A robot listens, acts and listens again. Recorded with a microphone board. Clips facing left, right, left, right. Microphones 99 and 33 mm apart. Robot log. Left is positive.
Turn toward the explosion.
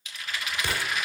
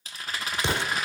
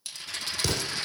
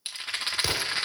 note: The explosion: about 20° right or 160° right.
cmd yaw -20
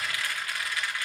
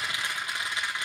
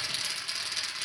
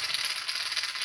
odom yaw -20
cmd idle
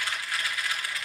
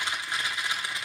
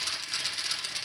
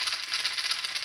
end: I heard an explosion, but can't make it out now. It was about straight ahead or 140° right.